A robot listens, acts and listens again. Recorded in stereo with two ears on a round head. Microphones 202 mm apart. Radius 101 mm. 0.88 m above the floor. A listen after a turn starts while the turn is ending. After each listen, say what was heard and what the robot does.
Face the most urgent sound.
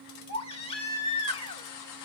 The baby crying: about 25° left or 155° left. Turn 25° left.
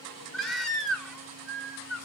Facing the baby crying, 1 to 2 m away.